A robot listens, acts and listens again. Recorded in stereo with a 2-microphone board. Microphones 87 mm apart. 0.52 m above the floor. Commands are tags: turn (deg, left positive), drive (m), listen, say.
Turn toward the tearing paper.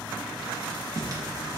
<turn deg="-35"/>
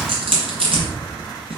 <turn deg="-105"/>
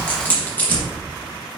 <turn deg="20"/>
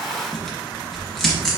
<say>Found it: tearing paper, straight ahead.</say>